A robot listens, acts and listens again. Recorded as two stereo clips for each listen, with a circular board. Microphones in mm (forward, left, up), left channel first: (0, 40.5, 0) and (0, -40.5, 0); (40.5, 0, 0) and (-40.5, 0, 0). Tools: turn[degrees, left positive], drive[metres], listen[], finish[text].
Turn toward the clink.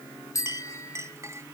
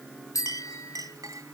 Thought: The clink: 140° right.
Action: turn[-140]
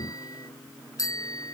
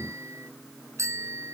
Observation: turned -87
Thought: Nothing new. It was at 55° right.
Action: turn[-55]
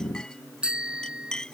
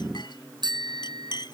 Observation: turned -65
Thought: The clink is now 10° left.
Action: turn[10]
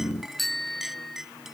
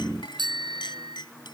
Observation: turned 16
Action: finish[Found it: a clink, straight ahead.]